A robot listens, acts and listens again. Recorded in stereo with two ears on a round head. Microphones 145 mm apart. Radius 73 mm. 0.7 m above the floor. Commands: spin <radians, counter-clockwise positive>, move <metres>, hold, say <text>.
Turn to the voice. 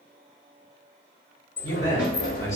spin 0.35
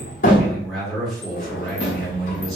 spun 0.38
say Found it: a man speaking, straight ahead, under 1 m away.